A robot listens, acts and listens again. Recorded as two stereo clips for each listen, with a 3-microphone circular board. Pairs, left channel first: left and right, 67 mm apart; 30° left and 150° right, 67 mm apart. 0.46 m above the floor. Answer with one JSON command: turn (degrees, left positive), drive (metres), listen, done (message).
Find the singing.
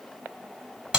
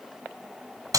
{"listen": true}
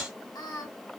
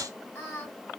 {"turn": 90}
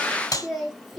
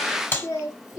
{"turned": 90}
{"done": "Facing the singing, 1 to 2 m away."}